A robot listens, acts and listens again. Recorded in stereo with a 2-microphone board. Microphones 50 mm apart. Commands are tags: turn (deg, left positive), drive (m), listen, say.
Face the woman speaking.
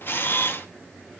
<listen/>
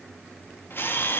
<listen/>
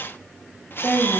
<turn deg="20"/>
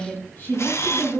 <turn deg="130"/>
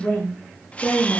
<turn deg="40"/>
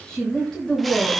<turn deg="15"/>
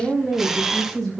<say>Facing the woman speaking.</say>